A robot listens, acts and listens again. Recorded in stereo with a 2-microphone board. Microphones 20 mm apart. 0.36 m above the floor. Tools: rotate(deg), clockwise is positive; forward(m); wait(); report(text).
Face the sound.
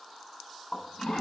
rotate(-60)
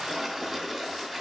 rotate(-10)
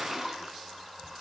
report("Facing the toilet flushing, 2 to 4 m away.")